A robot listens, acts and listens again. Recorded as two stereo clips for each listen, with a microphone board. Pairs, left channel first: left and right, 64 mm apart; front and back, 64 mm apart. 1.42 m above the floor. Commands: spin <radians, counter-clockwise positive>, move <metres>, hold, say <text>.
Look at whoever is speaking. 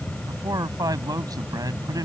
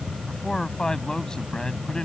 spin -1.40
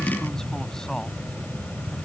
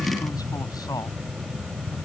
hold
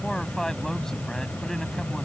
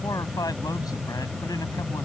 hold
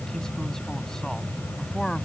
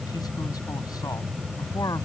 spin 0.17
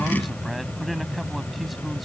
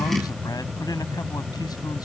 say Facing the man speaking.